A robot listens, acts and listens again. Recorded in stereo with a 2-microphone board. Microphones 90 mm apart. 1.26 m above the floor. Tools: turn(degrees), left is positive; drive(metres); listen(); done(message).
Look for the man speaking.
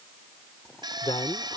turn(degrees=75)
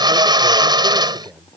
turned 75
turn(degrees=-10)
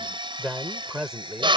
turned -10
done("Facing the man speaking.")